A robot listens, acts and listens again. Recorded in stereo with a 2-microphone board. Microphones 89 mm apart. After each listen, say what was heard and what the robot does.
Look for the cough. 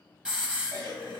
The cough: about 50° right or 130° right. Turn 50° right.
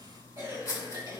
So it is at 65° right. Turn 65° right.
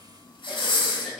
Facing the cough.